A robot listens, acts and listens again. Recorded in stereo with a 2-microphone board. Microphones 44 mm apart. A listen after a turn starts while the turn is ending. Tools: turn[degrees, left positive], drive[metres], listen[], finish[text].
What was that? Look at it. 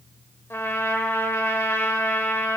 Action: turn[90]
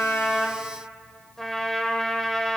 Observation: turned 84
Thought: So it is at 10° left.
Action: turn[10]
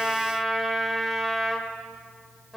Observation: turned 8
Action: finish[Facing the trumpet.]